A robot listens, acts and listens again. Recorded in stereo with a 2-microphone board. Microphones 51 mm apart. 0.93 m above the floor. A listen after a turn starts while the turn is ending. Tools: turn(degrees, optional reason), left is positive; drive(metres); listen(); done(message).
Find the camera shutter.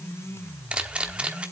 turn(degrees=-20, reason="The camera shutter: about 20° right or 160° right.")
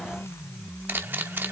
turn(degrees=-140, reason="So it is at 140° right.")
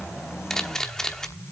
turn(degrees=10, reason="The camera shutter is now 10° left.")
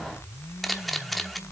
done("Facing the camera shutter.")